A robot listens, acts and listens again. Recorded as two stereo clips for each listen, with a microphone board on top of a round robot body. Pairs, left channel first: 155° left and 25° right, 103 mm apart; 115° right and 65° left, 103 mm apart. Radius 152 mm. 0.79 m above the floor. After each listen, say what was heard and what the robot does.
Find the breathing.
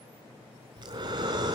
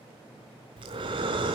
The breathing: 25° left. Turn 25° left.
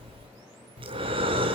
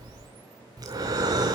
The breathing is now 15° left. Turn 15° left.
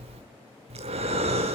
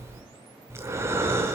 Facing the breathing.